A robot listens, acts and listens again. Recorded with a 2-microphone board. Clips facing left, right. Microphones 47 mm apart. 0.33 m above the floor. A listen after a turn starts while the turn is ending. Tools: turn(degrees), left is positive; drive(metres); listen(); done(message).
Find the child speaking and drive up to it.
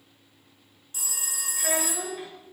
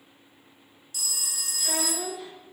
turn(degrees=90)
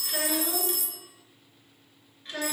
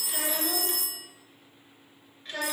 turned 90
drive(metres=1.0)
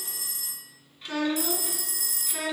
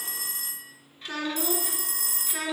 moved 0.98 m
drive(metres=1.0)
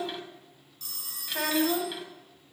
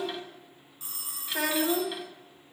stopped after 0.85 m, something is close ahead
done("I am next to the child speaking.")